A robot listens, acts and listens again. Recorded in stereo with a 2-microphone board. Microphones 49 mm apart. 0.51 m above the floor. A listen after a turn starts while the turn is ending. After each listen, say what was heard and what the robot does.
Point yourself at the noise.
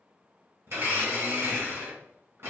The blender: about 60° right or 120° right. Turn 60° right.
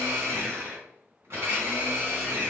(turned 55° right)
So it is at 65° right. Turn 65° right.
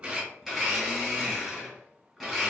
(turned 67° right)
Found it: a blender, straight ahead.